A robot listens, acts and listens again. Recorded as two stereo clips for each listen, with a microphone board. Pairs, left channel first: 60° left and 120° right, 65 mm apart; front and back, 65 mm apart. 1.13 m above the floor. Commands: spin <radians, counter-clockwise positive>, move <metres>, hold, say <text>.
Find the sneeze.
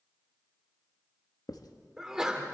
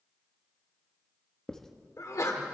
spin -0.70
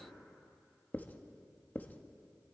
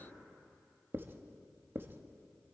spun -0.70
say I heard a sneeze from this way, but can't make it out now.